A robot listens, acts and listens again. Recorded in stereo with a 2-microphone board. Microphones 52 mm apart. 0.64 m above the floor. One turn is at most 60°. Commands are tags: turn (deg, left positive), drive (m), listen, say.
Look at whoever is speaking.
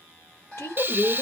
<turn deg="50"/>
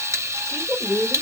<say>Found it: a woman speaking, straight ahead, 1 to 2 m away.</say>